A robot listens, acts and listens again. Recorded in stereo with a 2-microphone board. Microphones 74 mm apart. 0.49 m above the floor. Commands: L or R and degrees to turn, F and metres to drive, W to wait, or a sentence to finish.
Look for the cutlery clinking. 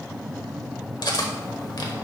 L60
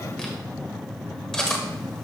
Found it: cutlery clinking, straight ahead.